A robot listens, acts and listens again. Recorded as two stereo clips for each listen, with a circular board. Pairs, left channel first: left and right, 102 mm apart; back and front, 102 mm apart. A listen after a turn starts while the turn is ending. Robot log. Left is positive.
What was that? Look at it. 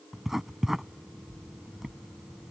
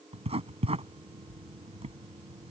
end: Facing the writing.